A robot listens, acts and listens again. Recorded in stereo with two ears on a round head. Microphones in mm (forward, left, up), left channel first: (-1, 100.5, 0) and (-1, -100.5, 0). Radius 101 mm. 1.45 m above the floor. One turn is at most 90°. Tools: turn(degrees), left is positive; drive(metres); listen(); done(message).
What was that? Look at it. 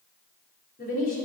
turn(degrees=40)
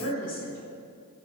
turn(degrees=90)
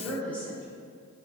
done("Facing the woman speaking, over 4 m away.")